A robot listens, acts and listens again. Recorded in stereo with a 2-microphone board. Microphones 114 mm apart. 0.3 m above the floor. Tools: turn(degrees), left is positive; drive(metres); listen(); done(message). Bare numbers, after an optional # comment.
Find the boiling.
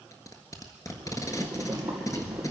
turn(30)
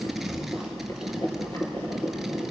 # So it is at 145° left.
turn(145)
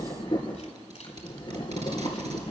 # The boiling is now 45° left.
turn(45)
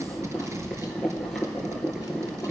done("Found it: boiling, straight ahead.")